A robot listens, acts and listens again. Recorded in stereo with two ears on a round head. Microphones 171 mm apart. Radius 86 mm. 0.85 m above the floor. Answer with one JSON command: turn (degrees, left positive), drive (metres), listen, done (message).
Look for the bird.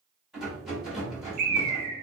{"turn": -55}
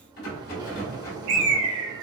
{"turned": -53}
{"turn": -70}
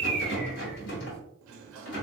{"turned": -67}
{"done": "Facing the bird."}